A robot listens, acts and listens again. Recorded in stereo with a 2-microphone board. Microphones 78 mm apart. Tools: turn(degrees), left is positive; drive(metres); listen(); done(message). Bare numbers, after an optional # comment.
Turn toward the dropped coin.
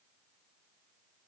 listen()
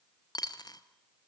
# The dropped coin: about 60° left or 120° left.
turn(60)
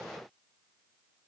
listen()
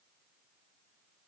done("I heard a dropped coin, but can't make it out now. It was about straight ahead or 60° left.")